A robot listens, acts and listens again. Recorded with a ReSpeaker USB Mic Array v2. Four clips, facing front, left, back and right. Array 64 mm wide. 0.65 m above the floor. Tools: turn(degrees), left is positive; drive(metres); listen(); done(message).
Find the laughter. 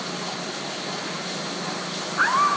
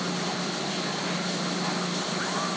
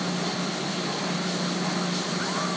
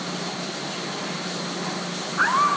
turn(degrees=-50)
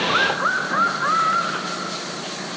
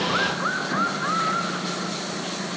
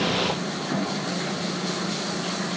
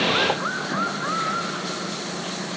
done("Facing the laughter.")